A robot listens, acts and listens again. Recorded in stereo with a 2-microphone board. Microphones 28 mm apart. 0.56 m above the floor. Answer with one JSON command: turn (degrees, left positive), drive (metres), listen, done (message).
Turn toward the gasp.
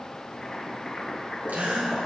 {"turn": -90}
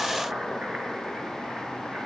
{"done": "I heard a gasp from this way, but can't make it out now."}